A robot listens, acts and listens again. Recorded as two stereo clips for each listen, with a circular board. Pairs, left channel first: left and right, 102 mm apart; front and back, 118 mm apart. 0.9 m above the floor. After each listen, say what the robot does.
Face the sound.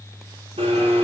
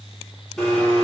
Turn 85° right.
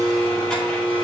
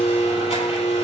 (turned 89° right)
Facing the blender, 2 to 4 m away.